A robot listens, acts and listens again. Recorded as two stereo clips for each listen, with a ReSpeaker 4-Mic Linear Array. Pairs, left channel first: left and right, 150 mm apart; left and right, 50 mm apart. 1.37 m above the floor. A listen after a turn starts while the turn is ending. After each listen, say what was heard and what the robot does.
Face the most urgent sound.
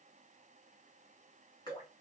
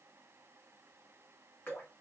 Keep listening.
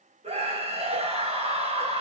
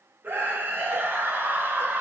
The scream: about 40° right or 140° right. Turn 40° right.
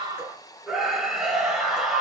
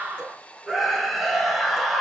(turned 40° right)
Facing the scream, 1 to 2 m away.